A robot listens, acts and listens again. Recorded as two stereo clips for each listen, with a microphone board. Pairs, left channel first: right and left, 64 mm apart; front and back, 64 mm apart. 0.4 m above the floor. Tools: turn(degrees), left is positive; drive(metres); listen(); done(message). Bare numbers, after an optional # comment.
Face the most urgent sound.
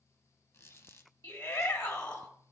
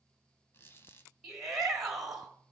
# The shout: 95° right.
turn(-95)
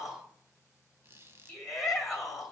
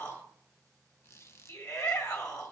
done("Found it: a shout, straight ahead, 1 to 2 m away.")